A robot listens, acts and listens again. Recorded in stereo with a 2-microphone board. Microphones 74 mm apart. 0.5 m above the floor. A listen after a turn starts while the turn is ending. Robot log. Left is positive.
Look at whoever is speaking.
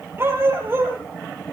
cmd idle
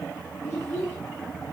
note: The child speaking: about 30° left or 150° left.
cmd yaw +30
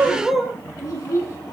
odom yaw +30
note: So it is at 125° left.
cmd yaw +125
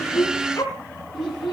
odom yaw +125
end: Found it: a child speaking, straight ahead.